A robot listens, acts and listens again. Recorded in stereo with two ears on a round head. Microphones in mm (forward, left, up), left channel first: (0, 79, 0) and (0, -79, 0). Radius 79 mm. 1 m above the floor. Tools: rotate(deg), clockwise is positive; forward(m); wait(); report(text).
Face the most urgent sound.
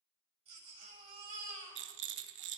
rotate(35)
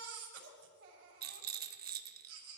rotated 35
rotate(110)
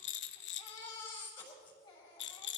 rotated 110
rotate(-25)
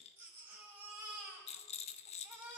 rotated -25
rotate(10)
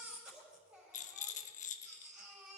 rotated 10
report("Facing the baby crying, 2 to 4 m away.")